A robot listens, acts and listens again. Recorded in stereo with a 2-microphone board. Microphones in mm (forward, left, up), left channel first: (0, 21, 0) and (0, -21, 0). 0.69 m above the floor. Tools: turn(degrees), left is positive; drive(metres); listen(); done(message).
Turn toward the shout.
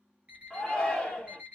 turn(degrees=20)
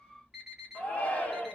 turn(degrees=140)
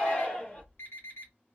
turn(degrees=35)
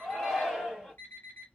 done("Facing the shout, 1 to 2 m away.")